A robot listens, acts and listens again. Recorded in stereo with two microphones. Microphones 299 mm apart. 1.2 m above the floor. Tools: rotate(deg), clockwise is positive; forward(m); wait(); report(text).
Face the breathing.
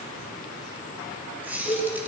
wait()
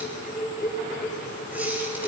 wait()
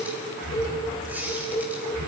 rotate(90)
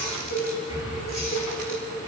rotate(10)
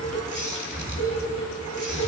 report("Facing the breathing, over 4 m away.")